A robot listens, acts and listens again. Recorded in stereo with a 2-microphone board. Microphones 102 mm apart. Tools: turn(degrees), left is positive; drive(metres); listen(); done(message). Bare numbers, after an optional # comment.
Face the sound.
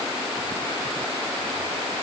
listen()
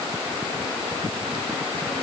listen()
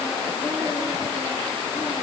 done("I can't make out anything to turn to.")